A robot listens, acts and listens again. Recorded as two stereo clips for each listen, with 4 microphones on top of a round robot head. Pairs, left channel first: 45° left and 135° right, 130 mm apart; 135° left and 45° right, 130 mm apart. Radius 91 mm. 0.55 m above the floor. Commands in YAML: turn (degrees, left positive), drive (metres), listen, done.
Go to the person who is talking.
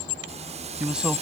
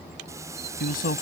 turn: 145
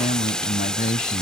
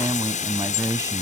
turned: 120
turn: 25
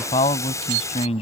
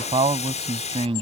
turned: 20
drive: 1.0
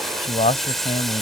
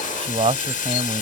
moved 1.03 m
drive: 1.0
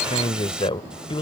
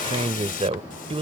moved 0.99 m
drive: 1.0
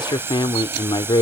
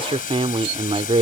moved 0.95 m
drive: 1.0
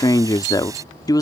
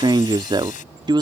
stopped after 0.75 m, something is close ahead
done: "Arrived at the man speaking, straight ahead."